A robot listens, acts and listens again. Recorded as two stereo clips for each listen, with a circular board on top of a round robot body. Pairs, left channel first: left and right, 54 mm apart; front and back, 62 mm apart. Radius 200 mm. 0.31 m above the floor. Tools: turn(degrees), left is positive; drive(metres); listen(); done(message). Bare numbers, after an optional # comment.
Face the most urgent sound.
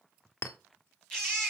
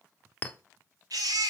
# The baby crying: 170° left.
turn(170)
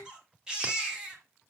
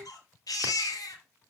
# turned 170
# The baby crying is now 15° right.
turn(-15)
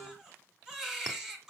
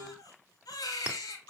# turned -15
# The baby crying is now 10° right.
turn(-10)
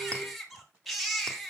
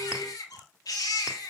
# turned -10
done("Facing the baby crying, 2 to 4 m away.")